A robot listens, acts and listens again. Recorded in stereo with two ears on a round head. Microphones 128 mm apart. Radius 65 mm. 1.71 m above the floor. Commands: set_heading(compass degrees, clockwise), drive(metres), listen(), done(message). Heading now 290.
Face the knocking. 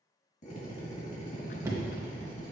set_heading(310)
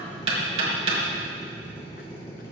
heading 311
set_heading(91)
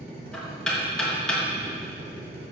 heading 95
done("Found it: knocking, straight ahead.")